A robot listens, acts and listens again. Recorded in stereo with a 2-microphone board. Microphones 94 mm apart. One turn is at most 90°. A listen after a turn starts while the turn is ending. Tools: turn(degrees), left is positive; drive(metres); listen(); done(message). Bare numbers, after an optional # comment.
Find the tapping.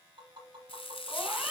# The tapping: about 60° right or 120° right.
turn(-60)
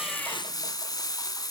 listen()
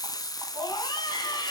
listen()
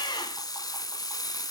done("I heard tapping, but can't make it out now. It was about straight ahead or 60° right.")